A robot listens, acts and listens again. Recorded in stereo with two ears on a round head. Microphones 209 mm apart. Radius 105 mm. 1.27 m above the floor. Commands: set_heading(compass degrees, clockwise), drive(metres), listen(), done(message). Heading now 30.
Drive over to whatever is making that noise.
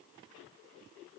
listen()
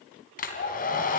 set_heading(350)
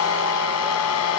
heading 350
set_heading(250)
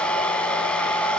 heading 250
drive(1.0)
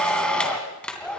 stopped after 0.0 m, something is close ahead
done("Something is in my way. I am facing the hair dryer but have not reached it.")